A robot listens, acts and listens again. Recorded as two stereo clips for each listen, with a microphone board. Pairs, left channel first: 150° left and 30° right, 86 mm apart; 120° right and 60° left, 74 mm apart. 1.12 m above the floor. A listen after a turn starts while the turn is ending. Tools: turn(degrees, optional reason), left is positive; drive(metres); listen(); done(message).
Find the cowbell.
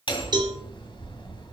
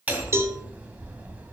done("Facing the cowbell, 1 to 2 m away.")